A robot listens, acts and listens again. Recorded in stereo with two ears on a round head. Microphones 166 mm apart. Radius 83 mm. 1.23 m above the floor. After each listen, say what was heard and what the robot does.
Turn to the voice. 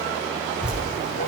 Keep listening.
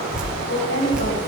The woman speaking: about 70° left or 110° left. Turn 70° left.
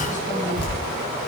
Keep listening.
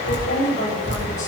So it is at 40° left. Turn 40° left.
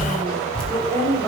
The woman speaking is now 15° left. Turn 15° left.
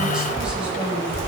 Keep listening.
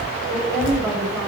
Found it: a woman speaking, straight ahead, over 4 m away.